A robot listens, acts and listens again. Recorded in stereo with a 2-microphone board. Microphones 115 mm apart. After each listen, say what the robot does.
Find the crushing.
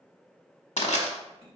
Turn 90° left.
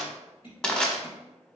Turn 10° left.
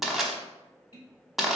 Found it: crushing, straight ahead.